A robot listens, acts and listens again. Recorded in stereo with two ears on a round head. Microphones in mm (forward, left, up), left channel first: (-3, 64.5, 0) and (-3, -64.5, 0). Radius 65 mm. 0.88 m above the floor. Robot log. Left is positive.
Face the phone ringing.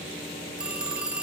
cmd yaw -30
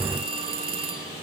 note: So it is at 145° right.
cmd yaw -145
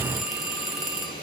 end: Facing the phone ringing.